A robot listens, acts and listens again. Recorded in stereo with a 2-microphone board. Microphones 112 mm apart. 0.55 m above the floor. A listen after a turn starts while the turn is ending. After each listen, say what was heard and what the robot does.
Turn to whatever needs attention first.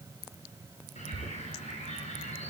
Keep listening.
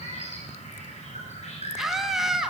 Turn 30° left.
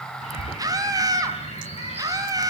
So it is at 30° right. Turn 30° right.
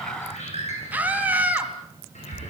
The scream is now 15° right. Turn 15° right.
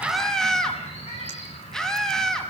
Facing the scream.